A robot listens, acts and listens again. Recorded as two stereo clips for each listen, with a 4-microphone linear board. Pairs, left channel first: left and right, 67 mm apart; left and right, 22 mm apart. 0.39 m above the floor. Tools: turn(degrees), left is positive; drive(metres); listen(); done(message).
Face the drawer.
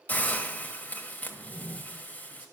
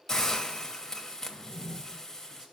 turn(degrees=35)
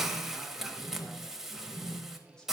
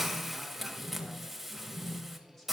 turn(degrees=110)
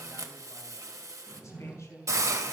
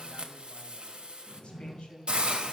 done("Found it: a drawer, straight ahead.")